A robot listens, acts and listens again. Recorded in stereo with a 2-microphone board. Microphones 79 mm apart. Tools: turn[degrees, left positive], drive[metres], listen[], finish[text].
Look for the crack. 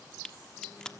Action: turn[30]
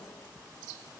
Action: listen[]
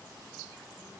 Action: finish[I heard a crack, but can't make it out now. It was about 20° right or 140° left.]